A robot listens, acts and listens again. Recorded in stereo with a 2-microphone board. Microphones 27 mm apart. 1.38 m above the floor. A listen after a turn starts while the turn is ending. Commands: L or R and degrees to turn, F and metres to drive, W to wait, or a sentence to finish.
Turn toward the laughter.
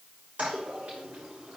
W
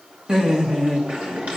R25
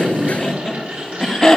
L15
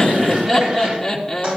Facing the laughter, 2 to 4 m away.